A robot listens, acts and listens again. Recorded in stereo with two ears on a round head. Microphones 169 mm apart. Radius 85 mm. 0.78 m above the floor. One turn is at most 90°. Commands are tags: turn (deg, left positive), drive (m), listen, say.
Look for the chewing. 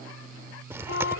<turn deg="-30"/>
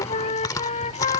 <turn deg="20"/>
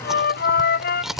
<say>Found it: chewing, straight ahead.</say>